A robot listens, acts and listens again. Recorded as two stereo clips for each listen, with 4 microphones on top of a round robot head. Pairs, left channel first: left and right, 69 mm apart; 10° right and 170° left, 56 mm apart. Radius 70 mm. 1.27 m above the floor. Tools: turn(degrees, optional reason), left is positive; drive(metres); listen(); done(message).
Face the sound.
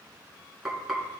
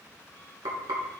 turn(degrees=180, reason="The frying: straight behind.")
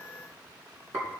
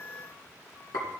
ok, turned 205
turn(degrees=-25, reason="The frying is now 25° right.")
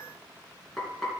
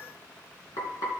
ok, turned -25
done("Found it: frying, straight ahead, 2 to 4 m away.")